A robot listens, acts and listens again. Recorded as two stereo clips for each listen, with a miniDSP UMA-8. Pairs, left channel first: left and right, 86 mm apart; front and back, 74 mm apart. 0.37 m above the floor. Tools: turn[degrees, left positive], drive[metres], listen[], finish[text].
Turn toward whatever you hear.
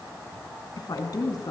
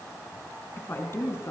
Thought: The woman speaking: 50° left.
Action: turn[50]
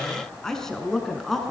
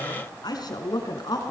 Action: finish[Facing the woman speaking, over 4 m away.]